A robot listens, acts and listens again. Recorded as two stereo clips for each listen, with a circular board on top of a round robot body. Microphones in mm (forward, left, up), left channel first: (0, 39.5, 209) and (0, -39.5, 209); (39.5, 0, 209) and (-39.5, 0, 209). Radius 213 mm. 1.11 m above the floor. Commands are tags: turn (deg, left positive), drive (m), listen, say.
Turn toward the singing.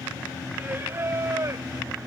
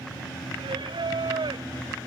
<turn deg="-150"/>
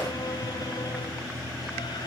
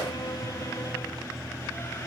<listen/>
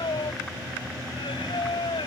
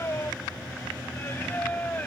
<turn deg="70"/>
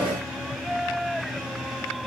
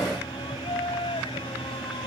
<say>Found it: singing, straight ahead.</say>